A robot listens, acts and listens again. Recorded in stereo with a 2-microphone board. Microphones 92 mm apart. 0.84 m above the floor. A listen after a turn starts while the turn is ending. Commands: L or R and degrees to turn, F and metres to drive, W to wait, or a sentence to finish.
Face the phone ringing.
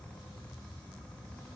W
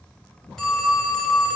L30
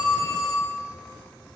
L145
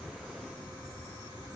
W
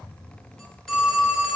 Found it: a phone ringing, straight ahead, under 1 m away.